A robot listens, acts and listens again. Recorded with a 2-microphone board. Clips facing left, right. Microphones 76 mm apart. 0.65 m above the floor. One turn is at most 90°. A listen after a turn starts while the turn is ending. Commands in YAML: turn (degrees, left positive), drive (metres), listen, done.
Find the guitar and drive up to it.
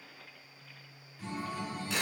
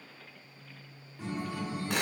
turn: -55
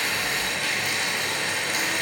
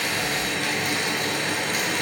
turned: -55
listen: true
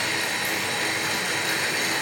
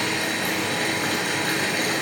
listen: true
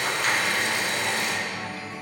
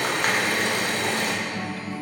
turn: -10
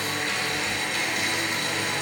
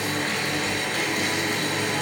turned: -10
drive: 1.0
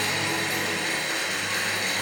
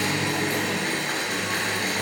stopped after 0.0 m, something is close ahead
done: "Something is in my way. I am facing the guitar but have not reached it."